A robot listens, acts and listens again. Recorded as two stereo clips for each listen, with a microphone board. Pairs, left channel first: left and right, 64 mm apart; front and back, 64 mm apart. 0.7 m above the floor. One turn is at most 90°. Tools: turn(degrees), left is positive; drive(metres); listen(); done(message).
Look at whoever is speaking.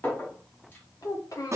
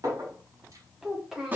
turn(degrees=90)
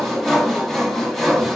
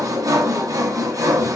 turn(degrees=10)
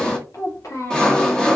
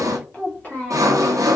turn(degrees=65)
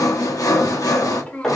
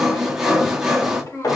turn(degrees=20)
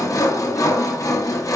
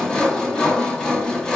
listen()
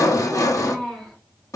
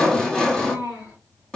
done("Found it: a child speaking, straight ahead.")